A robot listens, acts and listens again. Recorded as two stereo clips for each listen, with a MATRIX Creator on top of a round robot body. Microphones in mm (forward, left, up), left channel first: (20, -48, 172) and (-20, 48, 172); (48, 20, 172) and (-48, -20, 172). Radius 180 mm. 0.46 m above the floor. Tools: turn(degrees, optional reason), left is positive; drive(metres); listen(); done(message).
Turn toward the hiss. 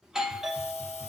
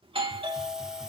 turn(degrees=-75, reason="The hiss: 75° right.")
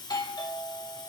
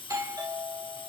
turn(degrees=-15, reason="The hiss is now 15° right.")
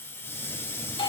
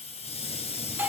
done("Facing the hiss.")